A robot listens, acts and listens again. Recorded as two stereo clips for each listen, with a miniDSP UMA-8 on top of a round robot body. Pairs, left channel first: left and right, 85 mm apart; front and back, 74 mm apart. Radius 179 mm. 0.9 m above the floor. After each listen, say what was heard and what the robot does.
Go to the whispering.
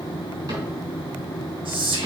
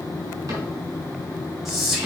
The whispering: 90° right. Turn 90° right.
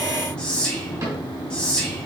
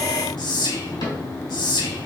The whispering is now 10° left. Turn 10° left.
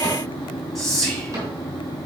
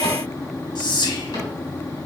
Drive 1.0 m forward.
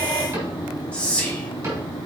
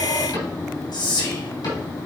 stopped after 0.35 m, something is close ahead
The whispering is now 15° left. Turn 15° left.
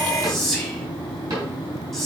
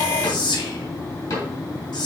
Something is in my way. I am facing the whispering but have not reached it.